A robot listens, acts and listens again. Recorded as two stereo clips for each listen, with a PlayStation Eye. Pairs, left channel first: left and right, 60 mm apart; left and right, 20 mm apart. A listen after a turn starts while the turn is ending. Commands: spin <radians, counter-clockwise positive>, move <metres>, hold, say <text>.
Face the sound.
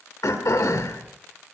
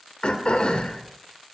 spin 1.31
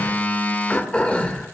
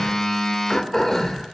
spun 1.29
spin 0.44
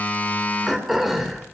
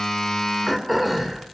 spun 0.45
say Found it: throat clearing, straight ahead, 2 to 4 m away.